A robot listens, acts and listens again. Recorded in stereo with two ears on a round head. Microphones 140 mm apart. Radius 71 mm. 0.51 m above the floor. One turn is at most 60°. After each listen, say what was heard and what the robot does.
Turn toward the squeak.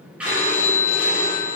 Turn 30° right.
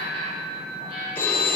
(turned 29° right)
So it is at 140° right. Turn 60° right.
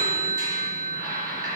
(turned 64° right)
The squeak is now 80° right. Turn 60° right.
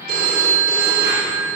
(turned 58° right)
Nothing new. It was at 20° right. Turn 20° right.
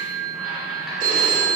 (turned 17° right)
Keep listening.
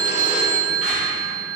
I heard a squeak from this way, but can't make it out now.